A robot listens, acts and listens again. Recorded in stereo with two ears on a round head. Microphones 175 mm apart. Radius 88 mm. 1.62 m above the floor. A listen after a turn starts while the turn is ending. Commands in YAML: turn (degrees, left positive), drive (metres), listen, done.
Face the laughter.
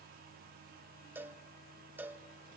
listen: true
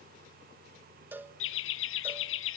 turn: 70
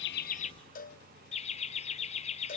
turn: 35
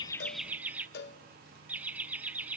turn: -10
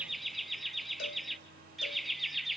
done: "Found it: laughter, straight ahead."